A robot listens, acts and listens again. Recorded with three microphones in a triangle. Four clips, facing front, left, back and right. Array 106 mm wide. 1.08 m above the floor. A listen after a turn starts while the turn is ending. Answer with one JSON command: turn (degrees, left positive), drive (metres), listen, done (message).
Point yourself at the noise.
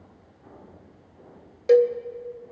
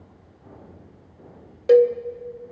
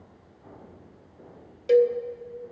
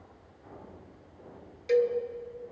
{"turn": 70}
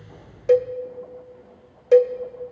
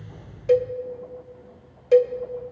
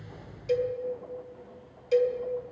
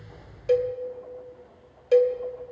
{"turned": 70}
{"done": "Facing the cowbell, under 1 m away."}